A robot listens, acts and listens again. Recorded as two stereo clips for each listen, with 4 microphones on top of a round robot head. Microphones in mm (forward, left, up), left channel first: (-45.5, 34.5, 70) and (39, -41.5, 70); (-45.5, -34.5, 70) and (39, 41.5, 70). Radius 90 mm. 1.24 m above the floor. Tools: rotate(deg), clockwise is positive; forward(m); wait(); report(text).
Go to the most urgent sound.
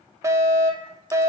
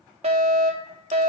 rotate(-20)
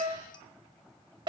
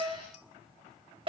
forward(1.0)
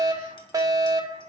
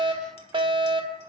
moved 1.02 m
rotate(-10)
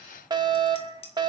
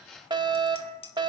forward(1.0)
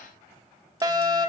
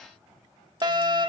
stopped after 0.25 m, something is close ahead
report("Arrived at the fire alarm, straight ahead.")